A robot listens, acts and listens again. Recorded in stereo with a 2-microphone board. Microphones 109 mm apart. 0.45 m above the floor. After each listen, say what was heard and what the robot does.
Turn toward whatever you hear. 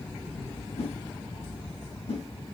Turn 90° left.
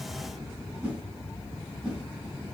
So it is at 10° right. Turn 10° right.
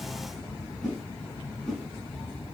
Found it: a whoosh, straight ahead, 2 to 4 m away.